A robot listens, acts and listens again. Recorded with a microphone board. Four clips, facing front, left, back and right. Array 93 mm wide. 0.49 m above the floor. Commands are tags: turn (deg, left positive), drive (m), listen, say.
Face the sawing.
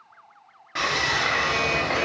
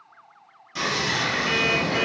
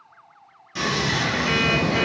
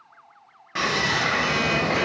<turn deg="-45"/>
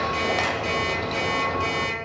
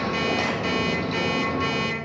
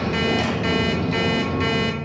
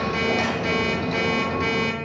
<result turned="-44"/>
<say>Facing the sawing.</say>